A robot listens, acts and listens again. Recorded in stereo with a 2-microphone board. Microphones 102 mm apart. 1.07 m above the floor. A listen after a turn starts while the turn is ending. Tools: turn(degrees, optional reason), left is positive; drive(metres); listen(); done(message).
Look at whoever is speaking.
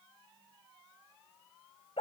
listen()
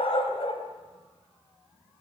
listen()
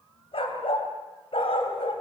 done("I can't make out anyone speaking, only a dog barking.")